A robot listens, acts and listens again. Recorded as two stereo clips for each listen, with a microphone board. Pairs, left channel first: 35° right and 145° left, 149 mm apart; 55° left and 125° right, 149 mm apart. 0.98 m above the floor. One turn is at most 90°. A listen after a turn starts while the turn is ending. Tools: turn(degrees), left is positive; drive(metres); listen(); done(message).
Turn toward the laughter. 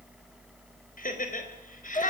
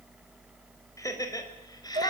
done("Found it: laughter, straight ahead.")